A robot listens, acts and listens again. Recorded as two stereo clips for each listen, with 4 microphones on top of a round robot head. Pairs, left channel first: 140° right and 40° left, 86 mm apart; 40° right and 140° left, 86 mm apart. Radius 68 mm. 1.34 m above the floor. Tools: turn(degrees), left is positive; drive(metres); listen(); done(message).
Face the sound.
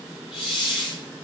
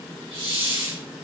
turn(degrees=120)
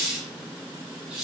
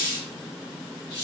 turn(degrees=-45)
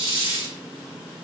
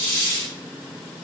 turn(degrees=15)
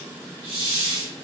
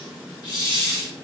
done("Found it: a hiss, straight ahead.")